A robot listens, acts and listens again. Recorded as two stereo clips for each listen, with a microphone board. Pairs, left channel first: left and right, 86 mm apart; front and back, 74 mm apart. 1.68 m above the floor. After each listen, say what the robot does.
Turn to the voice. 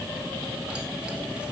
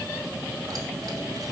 Keep listening.
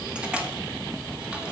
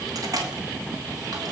Keep listening.
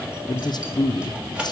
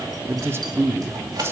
Turn 125° left.
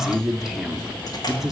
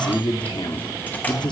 Facing the man speaking.